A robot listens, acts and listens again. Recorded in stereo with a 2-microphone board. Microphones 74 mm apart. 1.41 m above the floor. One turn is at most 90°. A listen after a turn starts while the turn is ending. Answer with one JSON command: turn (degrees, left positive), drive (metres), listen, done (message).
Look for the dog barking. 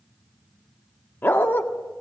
{"turn": 30}
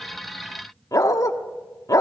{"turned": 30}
{"turn": 90}
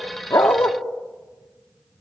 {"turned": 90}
{"turn": 40}
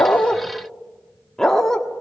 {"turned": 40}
{"turn": 10}
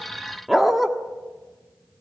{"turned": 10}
{"done": "Facing the dog barking."}